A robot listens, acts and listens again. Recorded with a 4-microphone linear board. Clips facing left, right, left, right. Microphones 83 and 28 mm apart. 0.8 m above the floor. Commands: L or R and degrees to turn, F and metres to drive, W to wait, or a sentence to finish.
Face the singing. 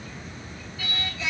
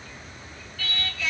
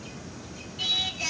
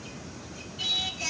L20
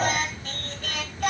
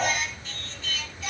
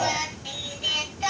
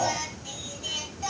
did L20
L120
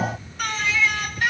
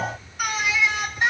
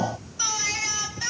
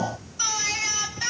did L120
R25
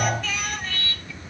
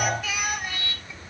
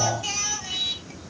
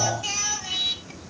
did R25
R15
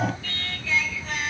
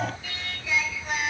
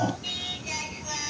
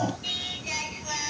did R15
R15
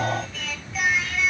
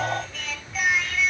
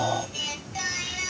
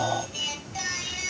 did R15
Found it: singing, straight ahead, 1 to 2 m away.